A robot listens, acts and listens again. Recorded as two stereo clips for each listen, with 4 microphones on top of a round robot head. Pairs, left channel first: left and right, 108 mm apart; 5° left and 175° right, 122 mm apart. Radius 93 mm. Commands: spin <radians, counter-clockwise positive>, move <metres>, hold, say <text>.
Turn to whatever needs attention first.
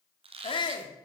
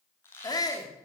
spin 1.05
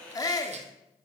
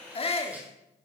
spin 0.70
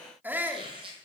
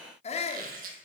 spin -0.35
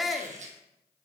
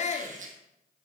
say Found it: a shout, straight ahead.